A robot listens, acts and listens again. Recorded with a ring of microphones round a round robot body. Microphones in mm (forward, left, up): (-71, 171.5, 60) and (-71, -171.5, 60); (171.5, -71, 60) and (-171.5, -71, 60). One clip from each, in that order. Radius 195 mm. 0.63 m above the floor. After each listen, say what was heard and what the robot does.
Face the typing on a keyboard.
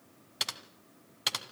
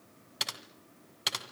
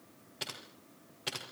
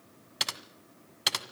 The typing on a keyboard: 175° left. Turn 175° left.
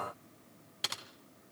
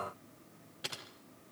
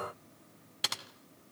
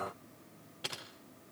The typing on a keyboard is now 35° left. Turn 35° left.
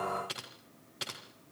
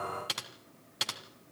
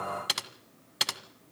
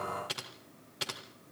The typing on a keyboard is now 25° right. Turn 25° right.
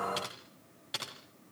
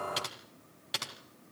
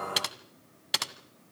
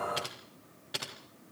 The typing on a keyboard is now 10° right. Turn 10° right.
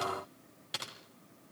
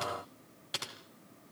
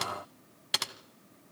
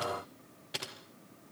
Facing the typing on a keyboard, 2 to 4 m away.